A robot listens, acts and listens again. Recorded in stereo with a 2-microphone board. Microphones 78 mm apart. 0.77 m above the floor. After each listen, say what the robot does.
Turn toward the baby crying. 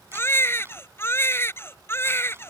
Turn 35° left.
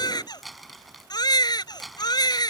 Turn 115° left.
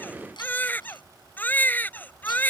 Turn 25° left.
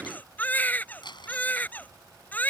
Turn 20° left.
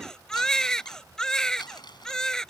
Turn 10° left.
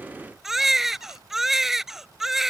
Facing the baby crying.